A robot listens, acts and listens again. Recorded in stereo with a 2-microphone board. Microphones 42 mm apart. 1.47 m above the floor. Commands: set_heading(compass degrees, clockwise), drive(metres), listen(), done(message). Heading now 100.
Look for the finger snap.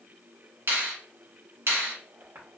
set_heading(175)
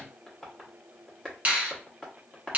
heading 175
set_heading(210)
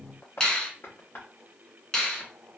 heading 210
set_heading(190)
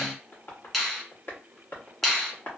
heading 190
done("Found it: a finger snap, straight ahead, 1 to 2 m away.")